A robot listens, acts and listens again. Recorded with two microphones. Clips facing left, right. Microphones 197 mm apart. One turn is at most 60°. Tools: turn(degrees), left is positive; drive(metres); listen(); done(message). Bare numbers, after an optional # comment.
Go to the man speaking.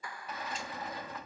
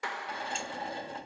listen()
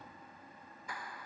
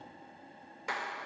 listen()
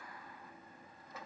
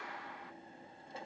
done("I can't make out a man speaking to turn to.")